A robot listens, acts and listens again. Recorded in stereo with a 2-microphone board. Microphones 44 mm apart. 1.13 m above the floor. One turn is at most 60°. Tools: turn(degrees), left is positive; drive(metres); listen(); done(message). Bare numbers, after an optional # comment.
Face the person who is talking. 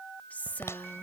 # The woman speaking: about 40° left or 140° left.
turn(40)
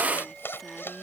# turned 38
listen()
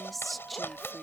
done("Found it: a woman speaking, straight ahead.")